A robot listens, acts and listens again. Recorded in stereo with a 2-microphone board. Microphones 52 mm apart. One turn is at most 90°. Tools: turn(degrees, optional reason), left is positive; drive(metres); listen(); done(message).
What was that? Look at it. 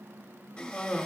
turn(degrees=20, reason="The cough: about 20° left or 160° left.")
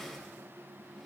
done("Found it: a cough, straight ahead.")